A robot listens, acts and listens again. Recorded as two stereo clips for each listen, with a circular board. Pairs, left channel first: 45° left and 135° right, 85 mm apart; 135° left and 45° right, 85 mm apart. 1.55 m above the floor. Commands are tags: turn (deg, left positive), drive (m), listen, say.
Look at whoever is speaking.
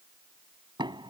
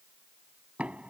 <listen/>
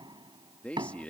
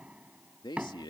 <turn deg="115"/>
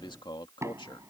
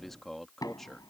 <turn deg="50"/>
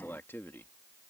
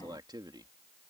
<turn deg="-15"/>
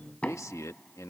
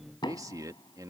<say>Facing the man speaking.</say>